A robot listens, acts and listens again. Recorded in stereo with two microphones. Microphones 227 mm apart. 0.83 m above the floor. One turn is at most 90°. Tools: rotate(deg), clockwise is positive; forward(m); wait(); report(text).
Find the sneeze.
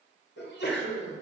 rotate(-50)
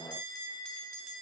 wait()
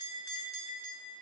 report("I heard a sneeze, but can't make it out now. It was about straight ahead or 80° left.")